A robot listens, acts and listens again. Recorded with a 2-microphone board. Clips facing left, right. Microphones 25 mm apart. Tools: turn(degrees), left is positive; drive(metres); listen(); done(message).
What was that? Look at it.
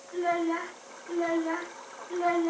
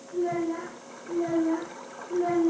turn(degrees=35)
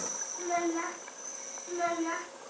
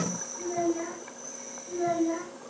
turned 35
turn(degrees=120)
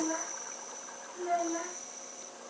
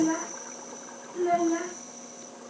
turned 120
turn(degrees=-20)
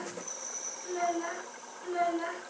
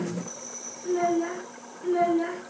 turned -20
done("Found it: a child speaking, straight ahead, over 4 m away.")